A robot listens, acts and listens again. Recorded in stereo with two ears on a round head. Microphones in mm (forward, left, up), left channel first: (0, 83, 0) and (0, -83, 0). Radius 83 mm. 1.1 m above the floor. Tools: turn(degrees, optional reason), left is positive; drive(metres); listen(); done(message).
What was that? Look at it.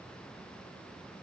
listen()
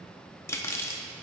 turn(degrees=30)
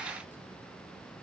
listen()
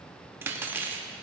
turn(degrees=-15, reason="So it is at 15° right.")
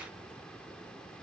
listen()
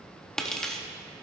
done("Facing the cutlery clinking.")